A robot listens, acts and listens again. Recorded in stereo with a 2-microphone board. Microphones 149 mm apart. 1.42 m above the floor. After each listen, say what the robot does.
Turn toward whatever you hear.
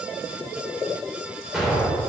Turn 30° right.
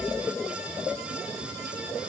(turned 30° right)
Keep listening.
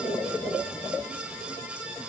I heard an explosion, but can't make it out now. It was about 25° left or 145° right.